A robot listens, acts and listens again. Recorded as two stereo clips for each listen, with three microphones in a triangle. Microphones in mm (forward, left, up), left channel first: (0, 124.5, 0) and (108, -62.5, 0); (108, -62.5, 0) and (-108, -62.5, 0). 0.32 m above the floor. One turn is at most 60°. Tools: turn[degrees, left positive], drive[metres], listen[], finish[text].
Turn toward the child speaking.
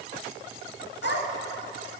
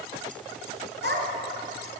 Thought: The child speaking: 145° left.
Action: turn[60]
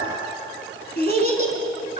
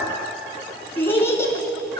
Thought: The child speaking is now 70° left.
Action: turn[60]
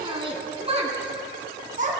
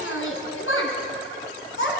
Thought: The child speaking is now 10° right.
Action: turn[-10]
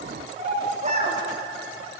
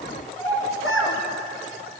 Action: finish[Found it: a child speaking, straight ahead.]